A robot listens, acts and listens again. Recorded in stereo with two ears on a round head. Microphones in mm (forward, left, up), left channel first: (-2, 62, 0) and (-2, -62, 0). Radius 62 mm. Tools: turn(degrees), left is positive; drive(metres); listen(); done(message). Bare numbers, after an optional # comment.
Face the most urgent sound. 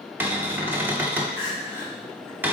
# The crying: about 20° right or 160° right.
turn(-20)
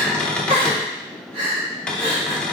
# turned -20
# So it is at 135° right.
turn(-135)
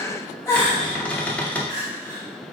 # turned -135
# The crying is now 25° left.
turn(25)
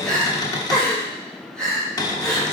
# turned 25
done("Facing the crying.")